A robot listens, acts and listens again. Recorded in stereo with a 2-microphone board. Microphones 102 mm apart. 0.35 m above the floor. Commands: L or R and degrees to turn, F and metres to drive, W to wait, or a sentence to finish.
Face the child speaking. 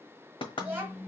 R20
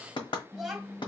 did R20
Found it: a child speaking, straight ahead, 1 to 2 m away.